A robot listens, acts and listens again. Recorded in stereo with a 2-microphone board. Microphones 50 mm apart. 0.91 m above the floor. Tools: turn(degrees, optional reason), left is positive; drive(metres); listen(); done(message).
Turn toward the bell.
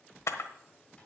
listen()
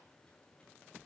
listen()
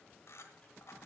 done("I can't make out a bell to turn to.")